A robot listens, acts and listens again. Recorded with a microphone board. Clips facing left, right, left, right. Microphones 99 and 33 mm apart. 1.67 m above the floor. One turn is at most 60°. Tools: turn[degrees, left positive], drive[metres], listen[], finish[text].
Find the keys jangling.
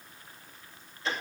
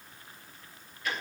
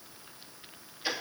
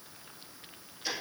Action: listen[]
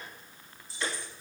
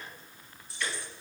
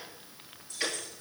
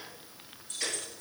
Thought: The keys jangling: about 60° right or 120° right.
Action: turn[-60]
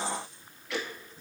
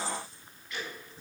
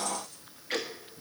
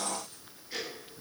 Action: listen[]
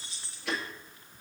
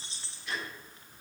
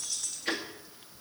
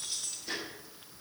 Thought: So it is at 25° right.
Action: turn[-25]
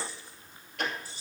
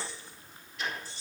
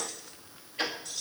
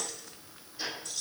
Thought: The keys jangling is now 10° left.
Action: turn[10]
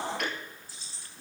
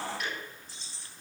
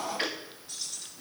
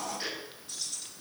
Action: finish[Facing the keys jangling, 2 to 4 m away.]